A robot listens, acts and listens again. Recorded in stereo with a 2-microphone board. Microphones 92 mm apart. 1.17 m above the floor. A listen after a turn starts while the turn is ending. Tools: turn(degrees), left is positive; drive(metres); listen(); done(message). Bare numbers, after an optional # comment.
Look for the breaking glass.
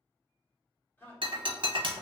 # The breaking glass: about 60° right or 120° right.
turn(-60)
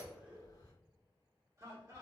listen()
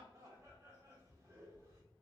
done("I heard breaking glass, but can't make it out now. It was about straight ahead or 60° right.")